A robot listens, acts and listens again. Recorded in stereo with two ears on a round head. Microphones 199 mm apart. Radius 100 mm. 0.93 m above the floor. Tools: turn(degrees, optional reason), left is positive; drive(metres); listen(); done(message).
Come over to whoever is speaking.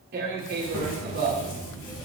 turn(degrees=30)
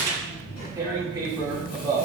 turn(degrees=135, reason="So it is at 135° left.")
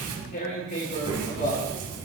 turn(degrees=-20, reason="The child speaking is now 20° right.")
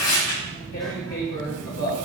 drive(metres=1.0)
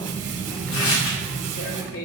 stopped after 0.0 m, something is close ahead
done("Something is in my way. I am facing the child speaking but have not reached it.")